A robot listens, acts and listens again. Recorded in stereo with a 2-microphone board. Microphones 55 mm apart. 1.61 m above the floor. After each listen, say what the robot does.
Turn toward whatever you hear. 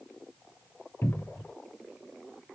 Turn 40° left.
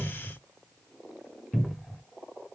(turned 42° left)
Facing the cupboard door, under 1 m away.